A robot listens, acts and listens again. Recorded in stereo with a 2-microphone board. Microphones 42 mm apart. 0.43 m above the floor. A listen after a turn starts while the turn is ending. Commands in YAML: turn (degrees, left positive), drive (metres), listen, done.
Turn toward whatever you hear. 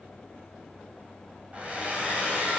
turn: -30
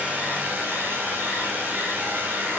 turn: -120
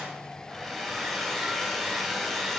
done: "Found it: a hair dryer, straight ahead."